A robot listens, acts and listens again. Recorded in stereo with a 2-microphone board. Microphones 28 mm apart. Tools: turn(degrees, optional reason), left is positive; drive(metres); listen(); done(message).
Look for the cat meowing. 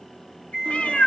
turn(degrees=50, reason="The cat meowing: about 50° left or 130° left.")
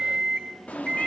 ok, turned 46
turn(degrees=70, reason="So it is at 70° left.")
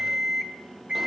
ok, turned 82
turn(degrees=-10, reason="Nothing new. It was at 10° right.")
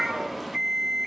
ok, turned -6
done("Found it: a cat meowing, straight ahead, under 1 m away.")